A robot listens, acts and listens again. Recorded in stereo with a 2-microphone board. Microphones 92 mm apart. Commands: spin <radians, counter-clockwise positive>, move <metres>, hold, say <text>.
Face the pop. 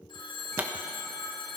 spin -0.35
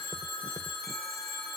hold
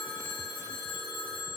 say I heard a pop, but can't make it out now. It was about straight ahead or 140° right.